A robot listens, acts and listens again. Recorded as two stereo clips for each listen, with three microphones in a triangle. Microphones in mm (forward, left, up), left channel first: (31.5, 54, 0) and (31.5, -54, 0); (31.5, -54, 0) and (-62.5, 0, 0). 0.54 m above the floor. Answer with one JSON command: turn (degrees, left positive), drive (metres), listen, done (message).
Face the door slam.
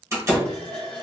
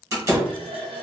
{"turn": -150}
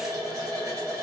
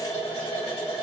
{"done": "I heard a door slam from this way, but can't make it out now."}